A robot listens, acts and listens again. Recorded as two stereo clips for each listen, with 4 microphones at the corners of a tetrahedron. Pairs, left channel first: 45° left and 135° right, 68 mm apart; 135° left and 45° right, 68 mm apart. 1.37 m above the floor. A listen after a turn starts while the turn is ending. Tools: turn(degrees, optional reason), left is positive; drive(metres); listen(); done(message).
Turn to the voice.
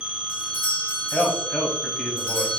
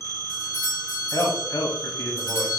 turn(degrees=125, reason="The man speaking: 125° left.")
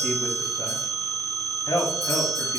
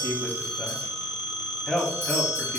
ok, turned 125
turn(degrees=50, reason="The man speaking is now 50° left.")
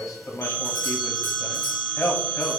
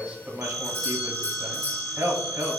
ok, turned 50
done("Found it: a man speaking, straight ahead, under 1 m away.")